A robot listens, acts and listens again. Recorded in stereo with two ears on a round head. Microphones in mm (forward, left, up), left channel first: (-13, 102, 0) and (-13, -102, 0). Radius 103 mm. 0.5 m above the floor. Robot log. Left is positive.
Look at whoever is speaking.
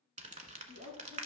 note: The woman speaking: about 45° right or 135° right.
cmd yaw -45
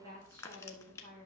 note: So it is at 90° right.
cmd yaw -90
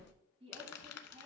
note: The woman speaking is now 25° right.
cmd yaw -25
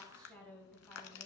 end: Found it: a woman speaking, straight ahead, 2 to 4 m away.